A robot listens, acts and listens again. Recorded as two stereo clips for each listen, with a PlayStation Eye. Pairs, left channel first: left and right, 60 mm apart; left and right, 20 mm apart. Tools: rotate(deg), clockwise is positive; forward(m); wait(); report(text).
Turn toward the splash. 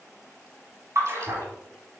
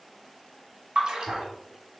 rotate(50)
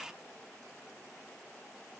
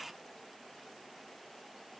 wait()
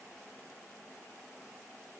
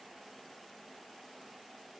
report("I heard a splash, but can't make it out now. It was about straight ahead or 80° right.")